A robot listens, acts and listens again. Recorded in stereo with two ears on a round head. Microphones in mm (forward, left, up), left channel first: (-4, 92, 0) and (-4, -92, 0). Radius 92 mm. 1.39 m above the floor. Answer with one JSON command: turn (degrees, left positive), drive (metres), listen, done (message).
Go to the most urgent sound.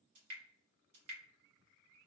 {"listen": true}
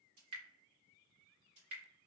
{"listen": true}
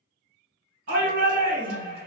{"turn": -55}
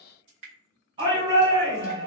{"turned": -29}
{"turn": -25}
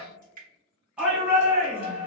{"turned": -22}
{"drive": 1.0}
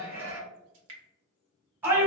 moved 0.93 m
{"turn": -10}
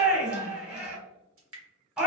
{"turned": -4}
{"drive": 1.0}
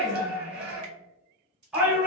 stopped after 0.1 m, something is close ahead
{"done": "I am next to the shout."}